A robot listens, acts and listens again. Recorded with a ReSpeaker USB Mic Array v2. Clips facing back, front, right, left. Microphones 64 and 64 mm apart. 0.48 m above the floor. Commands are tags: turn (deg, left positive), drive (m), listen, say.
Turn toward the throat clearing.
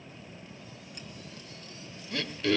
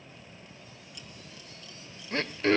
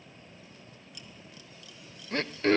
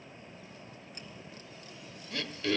<turn deg="-50"/>
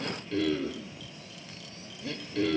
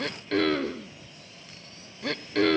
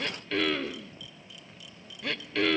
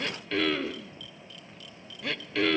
<say>Facing the throat clearing, 1 to 2 m away.</say>